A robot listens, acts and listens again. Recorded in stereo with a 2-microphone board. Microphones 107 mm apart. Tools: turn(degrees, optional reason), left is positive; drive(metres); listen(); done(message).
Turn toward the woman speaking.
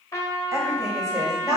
turn(degrees=-30, reason="The woman speaking: about 30° right or 150° right.")
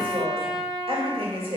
turn(degrees=-115, reason="So it is at 115° right.")
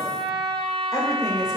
turn(degrees=35, reason="The woman speaking is now 35° left.")
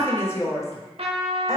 turn(degrees=30, reason="The woman speaking is now 30° left.")
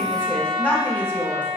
turn(degrees=15, reason="The woman speaking is now 15° left.")
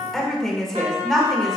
done("Facing the woman speaking.")